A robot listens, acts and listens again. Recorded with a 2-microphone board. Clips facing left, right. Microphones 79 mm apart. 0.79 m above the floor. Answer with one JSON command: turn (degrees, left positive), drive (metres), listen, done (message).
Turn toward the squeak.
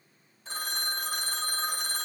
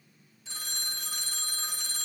{"listen": true}
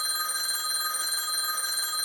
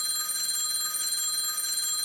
{"listen": true}
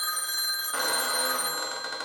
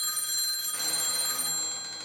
{"turn": 70}
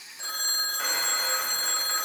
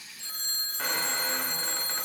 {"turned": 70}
{"listen": true}
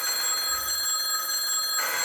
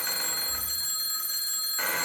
{"listen": true}
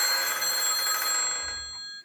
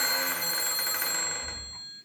{"done": "Facing the squeak, 1 to 2 m away."}